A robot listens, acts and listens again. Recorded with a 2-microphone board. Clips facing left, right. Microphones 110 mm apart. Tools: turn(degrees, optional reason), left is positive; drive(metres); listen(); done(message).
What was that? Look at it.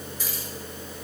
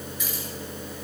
turn(degrees=35, reason="The keys jangling: about 35° left or 145° left.")
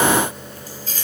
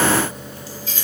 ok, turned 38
turn(degrees=40, reason="The keys jangling: about 40° left or 140° left.")
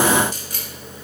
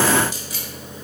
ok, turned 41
turn(degrees=130, reason="So it is at 130° left.")
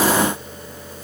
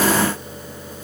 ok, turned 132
listen()
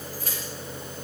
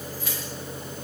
turn(degrees=45, reason="The keys jangling is now 45° left.")
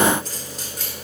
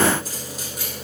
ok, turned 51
done("Facing the keys jangling.")